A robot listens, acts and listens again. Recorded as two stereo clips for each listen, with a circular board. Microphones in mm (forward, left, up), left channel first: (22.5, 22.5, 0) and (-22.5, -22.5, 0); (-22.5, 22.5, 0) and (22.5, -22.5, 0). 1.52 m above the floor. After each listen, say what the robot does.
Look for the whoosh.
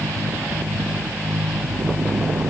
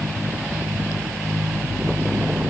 Keep listening.
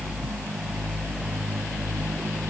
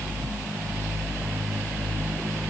Keep listening.
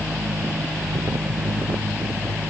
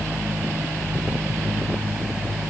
I can't make out a whoosh.